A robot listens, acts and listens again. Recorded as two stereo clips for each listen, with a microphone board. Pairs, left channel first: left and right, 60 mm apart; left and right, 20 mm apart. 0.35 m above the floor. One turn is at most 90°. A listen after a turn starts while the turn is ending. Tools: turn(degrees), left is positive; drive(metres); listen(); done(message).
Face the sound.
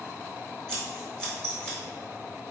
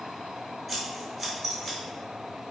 turn(degrees=30)
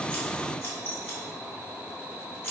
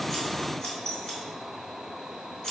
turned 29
turn(degrees=90)
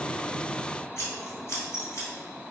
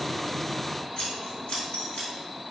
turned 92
turn(degrees=50)
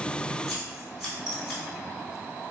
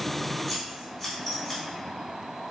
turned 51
done("Found it: scissors, straight ahead, 1 to 2 m away.")